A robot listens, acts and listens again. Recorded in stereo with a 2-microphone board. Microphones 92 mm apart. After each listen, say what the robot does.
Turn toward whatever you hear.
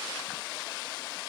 Keep listening.
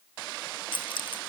Turn 65° left.
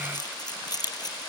Turn 45° left.
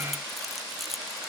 Facing the keys jangling.